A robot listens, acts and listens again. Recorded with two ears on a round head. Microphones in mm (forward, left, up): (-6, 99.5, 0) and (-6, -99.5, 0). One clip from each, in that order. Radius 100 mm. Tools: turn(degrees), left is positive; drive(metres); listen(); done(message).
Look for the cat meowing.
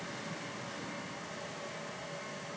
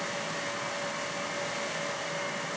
listen()
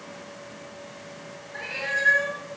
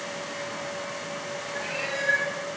turn(degrees=75)
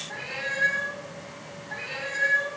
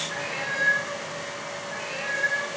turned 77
turn(degrees=25)
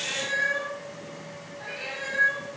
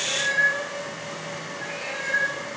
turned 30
done("Facing the cat meowing.")